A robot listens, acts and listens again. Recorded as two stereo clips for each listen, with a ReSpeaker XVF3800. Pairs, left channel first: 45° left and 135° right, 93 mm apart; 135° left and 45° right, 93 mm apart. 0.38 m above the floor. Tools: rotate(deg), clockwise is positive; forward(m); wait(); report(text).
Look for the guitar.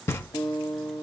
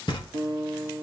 rotate(-10)
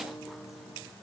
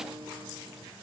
wait()
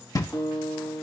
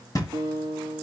report("Facing the guitar, 1 to 2 m away.")